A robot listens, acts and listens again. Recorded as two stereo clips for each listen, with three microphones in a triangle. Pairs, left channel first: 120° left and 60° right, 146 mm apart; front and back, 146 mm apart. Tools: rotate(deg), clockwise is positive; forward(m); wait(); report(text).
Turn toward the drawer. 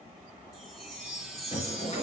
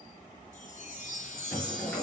rotate(-75)
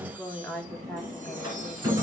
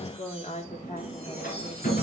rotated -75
report("Found it: a drawer, straight ahead, over 4 m away.")